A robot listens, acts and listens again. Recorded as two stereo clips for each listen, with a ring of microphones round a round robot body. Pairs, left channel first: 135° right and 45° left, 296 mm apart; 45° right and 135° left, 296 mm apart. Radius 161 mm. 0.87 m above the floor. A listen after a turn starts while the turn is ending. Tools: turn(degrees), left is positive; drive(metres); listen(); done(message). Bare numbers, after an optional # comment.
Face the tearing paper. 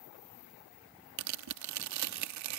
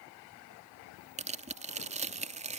# The tearing paper: 70° left.
turn(70)
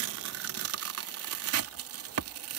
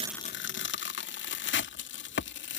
done("Facing the tearing paper.")